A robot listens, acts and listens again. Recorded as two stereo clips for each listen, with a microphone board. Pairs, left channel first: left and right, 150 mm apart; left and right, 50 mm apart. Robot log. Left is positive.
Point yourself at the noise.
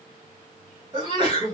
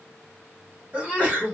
note: The sneeze: about 30° right or 150° right.
cmd yaw -30
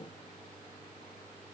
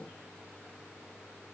cmd idle
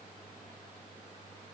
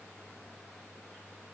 end: I heard a sneeze, but can't make it out now. It was about straight ahead or 120° right.